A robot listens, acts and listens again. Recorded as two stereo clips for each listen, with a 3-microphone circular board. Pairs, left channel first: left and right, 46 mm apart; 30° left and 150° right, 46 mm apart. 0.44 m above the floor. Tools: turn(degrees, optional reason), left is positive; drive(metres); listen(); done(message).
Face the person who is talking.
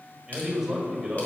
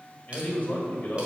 done("Found it: a man speaking, straight ahead.")